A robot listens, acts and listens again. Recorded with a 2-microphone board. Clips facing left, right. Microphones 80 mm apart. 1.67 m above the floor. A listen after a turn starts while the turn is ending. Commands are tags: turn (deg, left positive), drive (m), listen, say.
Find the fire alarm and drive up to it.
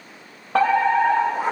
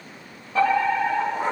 <turn deg="90"/>
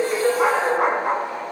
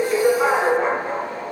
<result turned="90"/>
<turn deg="-10"/>
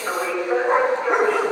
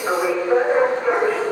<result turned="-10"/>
<drive m="1.0"/>
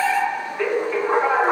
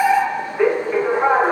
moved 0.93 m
<turn deg="-20"/>
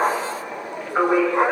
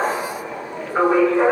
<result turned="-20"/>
<drive m="1.0"/>
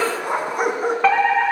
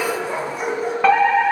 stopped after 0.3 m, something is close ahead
<say>Blocked. The fire alarm is further on, straight ahead.</say>